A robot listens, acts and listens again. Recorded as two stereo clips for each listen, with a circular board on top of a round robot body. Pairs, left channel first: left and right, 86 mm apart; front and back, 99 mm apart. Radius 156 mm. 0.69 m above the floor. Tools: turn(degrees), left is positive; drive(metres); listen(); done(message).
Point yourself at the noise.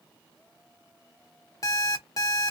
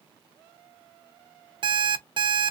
turn(degrees=140)
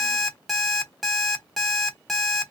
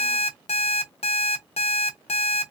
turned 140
done("Facing the alarm clock.")